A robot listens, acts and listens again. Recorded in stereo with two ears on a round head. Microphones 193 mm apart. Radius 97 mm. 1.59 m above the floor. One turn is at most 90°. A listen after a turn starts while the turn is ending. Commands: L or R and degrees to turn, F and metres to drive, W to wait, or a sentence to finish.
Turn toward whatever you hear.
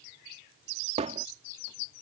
R30
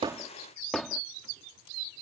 Facing the hammering.